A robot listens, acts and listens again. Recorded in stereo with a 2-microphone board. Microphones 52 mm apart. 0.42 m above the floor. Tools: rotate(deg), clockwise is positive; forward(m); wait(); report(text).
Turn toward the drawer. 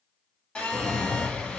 rotate(-30)
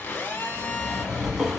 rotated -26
rotate(10)
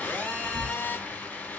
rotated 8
wait()
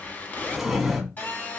report("Facing the drawer, 1 to 2 m away.")